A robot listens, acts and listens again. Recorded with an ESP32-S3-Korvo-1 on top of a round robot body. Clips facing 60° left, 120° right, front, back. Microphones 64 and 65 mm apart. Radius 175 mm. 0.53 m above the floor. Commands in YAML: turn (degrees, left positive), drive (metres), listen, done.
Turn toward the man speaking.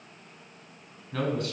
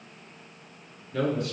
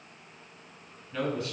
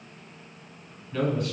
turn: 95
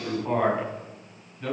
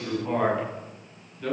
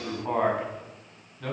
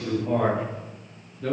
done: "Found it: a man speaking, straight ahead, over 4 m away."